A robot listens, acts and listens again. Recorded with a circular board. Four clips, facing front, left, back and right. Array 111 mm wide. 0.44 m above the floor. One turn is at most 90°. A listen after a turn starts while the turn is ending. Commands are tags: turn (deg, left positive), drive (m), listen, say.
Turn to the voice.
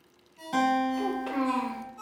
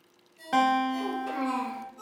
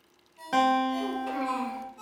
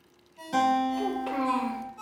<turn deg="-55"/>
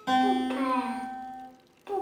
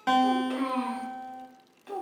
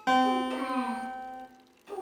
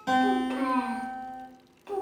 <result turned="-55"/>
<say>Found it: a child speaking, straight ahead.</say>